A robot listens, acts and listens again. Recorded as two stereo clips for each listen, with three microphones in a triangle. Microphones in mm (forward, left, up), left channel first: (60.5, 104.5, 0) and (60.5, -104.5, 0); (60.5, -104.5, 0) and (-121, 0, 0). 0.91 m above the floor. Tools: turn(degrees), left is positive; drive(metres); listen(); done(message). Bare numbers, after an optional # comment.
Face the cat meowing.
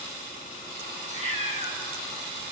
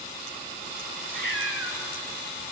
# The cat meowing: 30° right.
turn(-30)
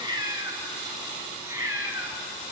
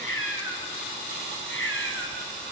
# The cat meowing is now 10° right.
turn(-10)
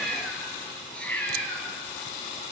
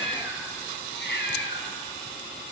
done("Found it: a cat meowing, straight ahead.")